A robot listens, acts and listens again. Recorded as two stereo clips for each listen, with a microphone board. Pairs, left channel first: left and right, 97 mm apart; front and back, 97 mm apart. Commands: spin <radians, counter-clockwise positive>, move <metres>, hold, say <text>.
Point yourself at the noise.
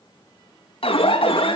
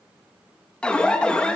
spin 1.40
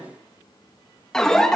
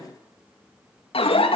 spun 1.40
say Found it: an alarm, straight ahead, 2 to 4 m away.